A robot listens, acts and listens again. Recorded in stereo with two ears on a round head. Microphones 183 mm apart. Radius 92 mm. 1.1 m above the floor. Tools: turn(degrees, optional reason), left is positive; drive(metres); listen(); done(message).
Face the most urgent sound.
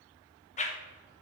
listen()
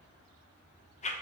listen()
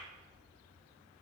done("I can't make out anything urgent, only a whoosh.")